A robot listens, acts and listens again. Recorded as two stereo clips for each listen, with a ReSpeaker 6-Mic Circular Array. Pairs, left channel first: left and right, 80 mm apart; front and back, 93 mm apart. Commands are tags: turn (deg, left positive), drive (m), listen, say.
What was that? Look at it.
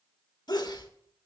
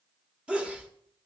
<turn deg="105"/>
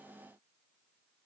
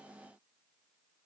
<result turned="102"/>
<say>I heard a sneeze from this way, but can't make it out now.</say>